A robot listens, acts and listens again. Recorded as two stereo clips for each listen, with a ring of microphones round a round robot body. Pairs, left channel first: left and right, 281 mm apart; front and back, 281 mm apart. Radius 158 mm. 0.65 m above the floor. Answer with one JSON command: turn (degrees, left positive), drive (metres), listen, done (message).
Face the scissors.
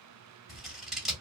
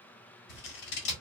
{"done": "Facing the scissors, 1 to 2 m away."}